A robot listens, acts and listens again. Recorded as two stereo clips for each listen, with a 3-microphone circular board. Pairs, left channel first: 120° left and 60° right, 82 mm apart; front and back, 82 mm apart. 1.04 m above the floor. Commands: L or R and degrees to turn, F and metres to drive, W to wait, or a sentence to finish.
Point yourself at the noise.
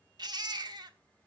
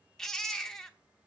R85
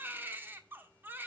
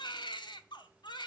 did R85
Found it: a baby crying, straight ahead, 1 to 2 m away.